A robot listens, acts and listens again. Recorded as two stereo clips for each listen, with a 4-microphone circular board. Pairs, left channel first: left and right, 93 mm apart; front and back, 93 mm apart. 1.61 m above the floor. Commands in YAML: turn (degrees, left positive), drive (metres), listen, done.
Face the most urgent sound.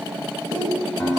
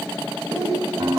turn: -135
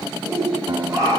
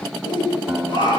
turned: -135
turn: -35
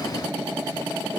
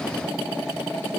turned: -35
listen: true
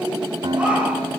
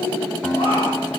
turn: -10
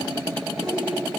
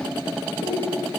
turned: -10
done: "Found it: a shout, straight ahead, over 4 m away."